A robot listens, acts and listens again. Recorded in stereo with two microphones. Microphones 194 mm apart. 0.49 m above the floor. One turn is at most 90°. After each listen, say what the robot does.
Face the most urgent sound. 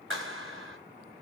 Keep listening.
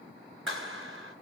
Keep listening.
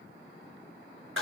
I can't make out anything urgent to turn to.